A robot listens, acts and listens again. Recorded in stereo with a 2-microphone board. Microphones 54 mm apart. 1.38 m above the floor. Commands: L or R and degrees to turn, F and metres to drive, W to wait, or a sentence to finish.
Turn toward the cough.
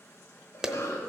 L90
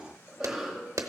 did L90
R10
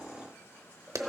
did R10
Facing the cough.